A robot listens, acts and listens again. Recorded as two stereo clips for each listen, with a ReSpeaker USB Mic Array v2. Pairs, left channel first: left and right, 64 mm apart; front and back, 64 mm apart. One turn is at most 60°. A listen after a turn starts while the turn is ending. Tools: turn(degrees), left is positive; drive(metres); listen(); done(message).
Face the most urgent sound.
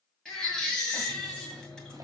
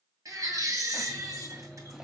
turn(degrees=60)
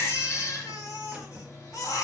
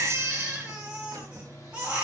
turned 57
turn(degrees=60)
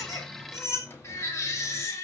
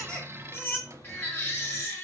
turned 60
turn(degrees=50)
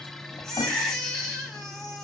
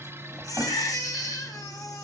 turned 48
done("Found it: a baby crying, straight ahead, 2 to 4 m away.")